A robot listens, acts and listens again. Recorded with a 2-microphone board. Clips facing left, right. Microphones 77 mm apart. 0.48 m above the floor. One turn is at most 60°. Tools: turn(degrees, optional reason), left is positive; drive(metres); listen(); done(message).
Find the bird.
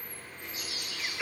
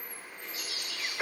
turn(degrees=25, reason="The bird: about 25° left or 155° left.")
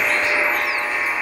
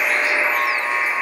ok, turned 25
listen()
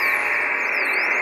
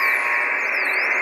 listen()
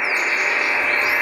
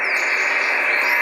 done("I heard a bird, but can't make it out now. It was about straight ahead or 130° left.")